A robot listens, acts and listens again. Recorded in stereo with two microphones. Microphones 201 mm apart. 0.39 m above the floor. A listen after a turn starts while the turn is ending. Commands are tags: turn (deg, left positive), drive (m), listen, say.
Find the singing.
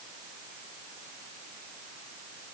<listen/>
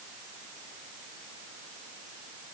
<listen/>
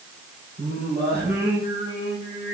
<turn deg="-50"/>
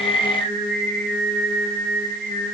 <turn deg="-80"/>
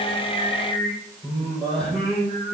<say>Facing the singing.</say>